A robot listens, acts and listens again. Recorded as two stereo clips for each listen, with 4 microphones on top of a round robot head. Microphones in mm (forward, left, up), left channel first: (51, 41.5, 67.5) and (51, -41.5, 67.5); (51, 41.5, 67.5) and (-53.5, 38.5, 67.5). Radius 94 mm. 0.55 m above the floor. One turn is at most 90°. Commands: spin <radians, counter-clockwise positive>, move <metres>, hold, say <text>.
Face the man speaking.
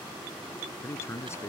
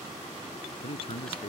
spin 0.61
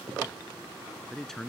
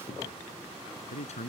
say Facing the man speaking.